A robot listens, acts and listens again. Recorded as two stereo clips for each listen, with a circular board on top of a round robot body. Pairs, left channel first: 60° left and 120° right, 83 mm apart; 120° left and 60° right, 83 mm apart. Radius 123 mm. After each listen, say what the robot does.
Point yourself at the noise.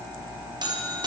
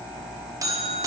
Turn 100° right.
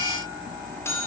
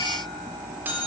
Found it: a buzzer, straight ahead.